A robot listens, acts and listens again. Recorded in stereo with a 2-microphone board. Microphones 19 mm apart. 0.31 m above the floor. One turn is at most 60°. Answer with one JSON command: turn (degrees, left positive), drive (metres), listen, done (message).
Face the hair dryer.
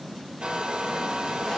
{"turn": -60}
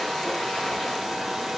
{"done": "Facing the hair dryer, over 4 m away."}